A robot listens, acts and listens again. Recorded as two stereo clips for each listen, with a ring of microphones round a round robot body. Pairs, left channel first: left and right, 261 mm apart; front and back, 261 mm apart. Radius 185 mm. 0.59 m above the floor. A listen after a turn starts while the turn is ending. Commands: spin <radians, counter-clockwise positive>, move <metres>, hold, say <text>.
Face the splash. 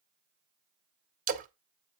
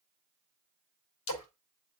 spin -0.61
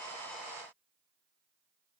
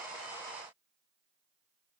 say Facing where the splash came from. I can't hear it now.